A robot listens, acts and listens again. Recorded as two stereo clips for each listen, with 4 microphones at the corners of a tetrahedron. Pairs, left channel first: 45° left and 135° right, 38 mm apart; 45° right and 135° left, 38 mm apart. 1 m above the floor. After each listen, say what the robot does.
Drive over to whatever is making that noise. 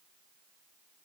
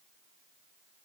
Keep listening.
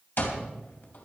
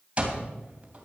Turn 75° left.
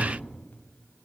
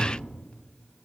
Keep listening.
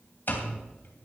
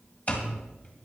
Drive 1.0 m forward.
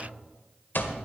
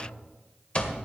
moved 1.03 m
Turn 10° left.
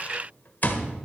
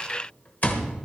Drive 1.0 m forward.
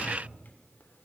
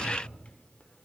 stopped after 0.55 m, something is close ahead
Keep listening.
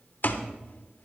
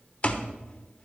Arrived at the alarm clock, straight ahead.